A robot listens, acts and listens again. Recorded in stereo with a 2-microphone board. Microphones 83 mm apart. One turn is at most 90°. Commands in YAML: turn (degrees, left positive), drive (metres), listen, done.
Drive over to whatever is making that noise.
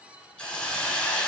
turn: 30
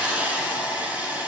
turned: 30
turn: -20
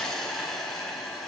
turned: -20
drive: 1.0
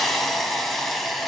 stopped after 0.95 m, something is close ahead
done: "Arrived at the hiss, straight ahead."